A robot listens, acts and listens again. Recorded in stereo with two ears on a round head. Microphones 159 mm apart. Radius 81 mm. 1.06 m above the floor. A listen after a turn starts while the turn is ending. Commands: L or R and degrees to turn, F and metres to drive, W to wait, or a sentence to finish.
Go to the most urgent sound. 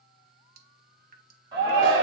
R20
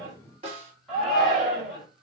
F1.0
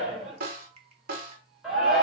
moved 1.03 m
F1.0
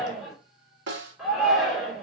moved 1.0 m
F1.0
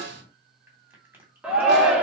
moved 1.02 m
F1.0
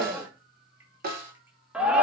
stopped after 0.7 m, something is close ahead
I am next to the shout.